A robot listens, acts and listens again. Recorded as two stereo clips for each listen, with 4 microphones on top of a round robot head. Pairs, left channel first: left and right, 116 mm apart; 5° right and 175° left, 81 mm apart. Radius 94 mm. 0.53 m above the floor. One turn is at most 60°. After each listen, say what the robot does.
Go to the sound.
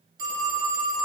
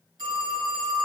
Turn 60° right.
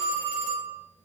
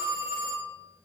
Turn 60° right.
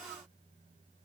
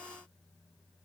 Turn 50° right.
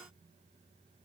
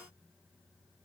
Keep listening.
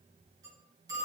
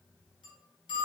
Turn 25° right.
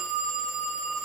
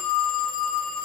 Drive 1.0 m forward.
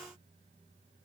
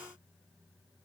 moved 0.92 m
Keep listening.
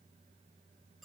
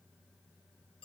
Keep listening.
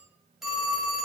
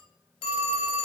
Drive 1.0 m forward.
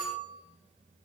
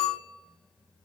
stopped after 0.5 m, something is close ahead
Arrived at the phone ringing, straight ahead.